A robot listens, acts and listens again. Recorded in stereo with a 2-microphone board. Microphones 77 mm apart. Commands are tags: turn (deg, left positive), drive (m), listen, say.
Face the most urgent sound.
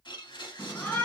<turn deg="20"/>
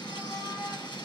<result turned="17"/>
<turn deg="145"/>
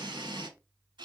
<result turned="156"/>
<turn deg="-20"/>
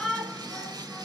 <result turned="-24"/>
<say>Found it: a shout, straight ahead.</say>